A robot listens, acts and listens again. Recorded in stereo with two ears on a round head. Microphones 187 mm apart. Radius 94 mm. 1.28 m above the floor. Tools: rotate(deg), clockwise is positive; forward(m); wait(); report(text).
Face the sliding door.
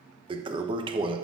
wait()
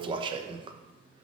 wait()
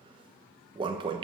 report("I can't make out a sliding door to turn to.")